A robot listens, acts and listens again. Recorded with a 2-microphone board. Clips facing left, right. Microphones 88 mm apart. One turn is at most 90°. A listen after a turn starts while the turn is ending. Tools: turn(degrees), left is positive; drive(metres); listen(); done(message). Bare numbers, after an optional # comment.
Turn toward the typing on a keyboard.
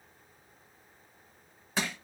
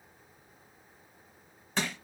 listen()
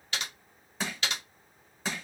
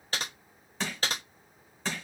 # The typing on a keyboard: about 40° right or 140° right.
turn(-40)
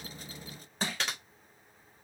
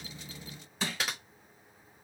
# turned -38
done("Facing the typing on a keyboard, under 1 m away.")